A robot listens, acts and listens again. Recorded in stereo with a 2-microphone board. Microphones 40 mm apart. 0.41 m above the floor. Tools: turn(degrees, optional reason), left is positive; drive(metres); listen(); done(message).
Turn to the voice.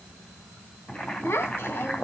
turn(degrees=65, reason="The child speaking: about 65° left or 115° left.")
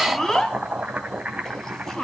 turn(degrees=10, reason="So it is at 10° left.")
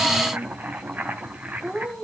done("Facing the child speaking.")